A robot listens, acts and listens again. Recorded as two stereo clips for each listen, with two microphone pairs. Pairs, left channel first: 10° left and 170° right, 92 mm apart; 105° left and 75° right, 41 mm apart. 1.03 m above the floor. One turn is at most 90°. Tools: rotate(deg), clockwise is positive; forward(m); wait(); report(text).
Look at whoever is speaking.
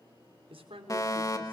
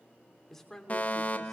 rotate(90)
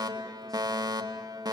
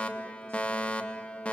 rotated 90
rotate(85)
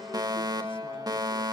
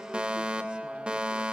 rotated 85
wait()
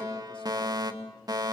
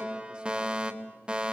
report("Facing where the man speaking came from. I can't hear it now.")